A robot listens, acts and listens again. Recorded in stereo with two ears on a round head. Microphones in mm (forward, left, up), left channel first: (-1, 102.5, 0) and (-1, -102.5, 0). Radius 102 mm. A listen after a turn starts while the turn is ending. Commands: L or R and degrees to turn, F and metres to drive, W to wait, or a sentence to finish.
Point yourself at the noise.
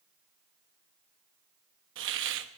R55
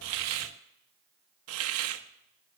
R70
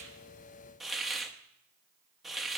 Found it: a hiss, straight ahead.